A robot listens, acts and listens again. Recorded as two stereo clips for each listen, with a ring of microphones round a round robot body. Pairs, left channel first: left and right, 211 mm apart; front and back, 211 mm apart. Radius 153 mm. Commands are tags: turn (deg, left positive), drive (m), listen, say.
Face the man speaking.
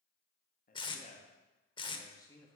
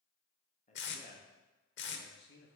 <turn deg="10"/>
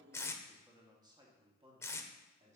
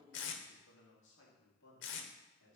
<turn deg="-35"/>
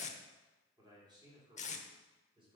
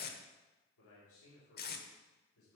<turn deg="-25"/>
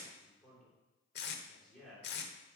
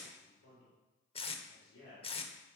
<say>Found it: a man speaking, straight ahead.</say>